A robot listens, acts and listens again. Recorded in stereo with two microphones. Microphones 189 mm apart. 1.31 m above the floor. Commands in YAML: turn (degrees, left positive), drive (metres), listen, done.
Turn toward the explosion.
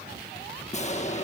turn: 35
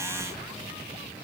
listen: true
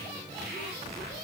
done: "I heard an explosion, but can't make it out now. It was about straight ahead or 110° left."